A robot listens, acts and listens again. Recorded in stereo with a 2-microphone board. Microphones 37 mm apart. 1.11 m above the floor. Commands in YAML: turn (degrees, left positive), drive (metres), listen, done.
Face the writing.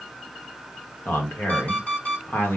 listen: true
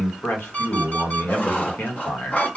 turn: 45
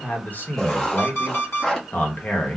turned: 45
turn: 10
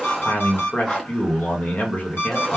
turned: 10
done: "Found it: writing, straight ahead, under 1 m away."